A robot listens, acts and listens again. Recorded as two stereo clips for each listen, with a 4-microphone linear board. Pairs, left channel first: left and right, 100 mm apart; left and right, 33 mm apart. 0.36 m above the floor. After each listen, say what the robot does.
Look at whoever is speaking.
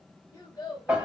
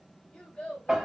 Turn 35° left.
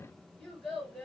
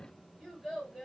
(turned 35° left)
Found it: a child speaking, straight ahead.